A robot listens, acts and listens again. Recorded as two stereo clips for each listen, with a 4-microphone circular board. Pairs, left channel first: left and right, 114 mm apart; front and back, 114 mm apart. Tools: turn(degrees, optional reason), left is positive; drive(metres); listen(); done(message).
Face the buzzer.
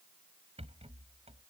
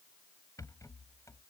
listen()
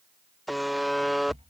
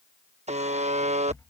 turn(degrees=180, reason="The buzzer: straight behind.")
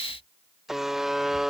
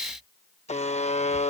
done("Facing the buzzer.")